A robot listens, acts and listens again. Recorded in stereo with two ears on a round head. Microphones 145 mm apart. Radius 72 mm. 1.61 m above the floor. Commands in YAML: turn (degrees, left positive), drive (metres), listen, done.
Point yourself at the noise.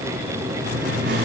turn: -70
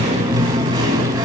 turn: -30
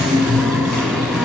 done: "Facing the singing, 2 to 4 m away."